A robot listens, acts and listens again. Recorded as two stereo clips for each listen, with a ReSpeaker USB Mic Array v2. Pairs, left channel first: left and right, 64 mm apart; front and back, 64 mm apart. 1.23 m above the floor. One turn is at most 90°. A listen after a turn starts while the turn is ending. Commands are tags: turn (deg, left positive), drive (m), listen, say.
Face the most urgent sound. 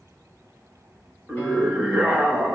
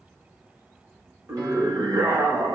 <turn deg="-90"/>
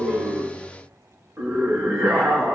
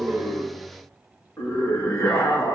<turn deg="-40"/>
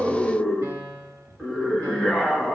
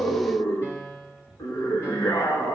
<say>Found it: a scream, straight ahead.</say>